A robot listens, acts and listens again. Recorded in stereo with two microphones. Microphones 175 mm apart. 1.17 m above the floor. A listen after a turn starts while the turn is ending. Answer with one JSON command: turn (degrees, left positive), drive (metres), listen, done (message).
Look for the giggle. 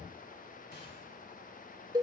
{"listen": true}
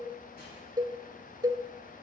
{"listen": true}
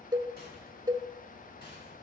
{"done": "I can't make out a giggle to turn to."}